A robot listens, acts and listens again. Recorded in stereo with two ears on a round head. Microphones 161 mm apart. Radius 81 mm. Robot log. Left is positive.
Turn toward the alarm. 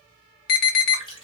note: The alarm: about 60° left or 120° left.
cmd yaw +60
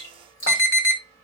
note: So it is at 15° left.
cmd yaw +15
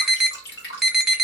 end: Found it: an alarm, straight ahead, under 1 m away.